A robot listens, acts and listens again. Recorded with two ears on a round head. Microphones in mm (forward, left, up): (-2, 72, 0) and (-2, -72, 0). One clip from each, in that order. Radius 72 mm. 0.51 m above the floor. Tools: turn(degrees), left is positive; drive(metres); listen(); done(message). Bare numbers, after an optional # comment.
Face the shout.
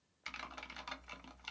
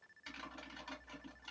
listen()
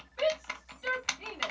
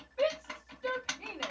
# The shout: about 35° left or 145° left.
turn(35)
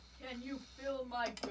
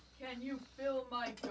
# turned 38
done("Facing the shout, 1 to 2 m away.")